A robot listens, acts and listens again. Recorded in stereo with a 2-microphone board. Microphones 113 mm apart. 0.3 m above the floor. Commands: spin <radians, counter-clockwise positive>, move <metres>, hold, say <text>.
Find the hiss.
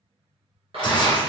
spin 0.87
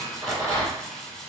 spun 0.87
say Found it: a hiss, straight ahead, under 1 m away.